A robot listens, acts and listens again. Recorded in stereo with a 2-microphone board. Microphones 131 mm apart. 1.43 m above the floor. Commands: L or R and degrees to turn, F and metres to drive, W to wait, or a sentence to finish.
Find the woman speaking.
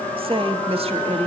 R50
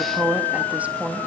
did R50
R15
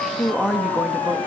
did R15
R10
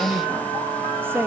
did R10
R20
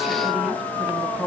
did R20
R10
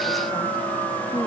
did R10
W
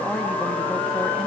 Facing the woman speaking, 2 to 4 m away.